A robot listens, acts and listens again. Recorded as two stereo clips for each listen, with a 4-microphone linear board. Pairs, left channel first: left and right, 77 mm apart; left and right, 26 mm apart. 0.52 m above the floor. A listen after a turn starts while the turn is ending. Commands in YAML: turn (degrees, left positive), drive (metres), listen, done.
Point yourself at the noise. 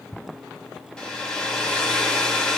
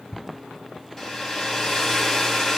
turn: 30
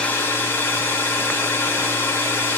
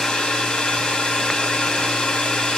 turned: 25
turn: 145
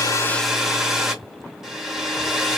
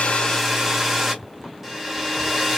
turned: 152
turn: -10
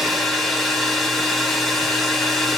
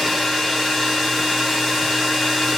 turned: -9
done: "Found it: a hair dryer, straight ahead."